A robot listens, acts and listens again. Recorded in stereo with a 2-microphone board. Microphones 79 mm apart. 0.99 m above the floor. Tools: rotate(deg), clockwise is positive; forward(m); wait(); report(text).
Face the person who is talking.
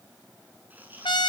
wait()
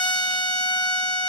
wait()
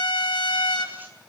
report("I can't make out anyone speaking to turn to.")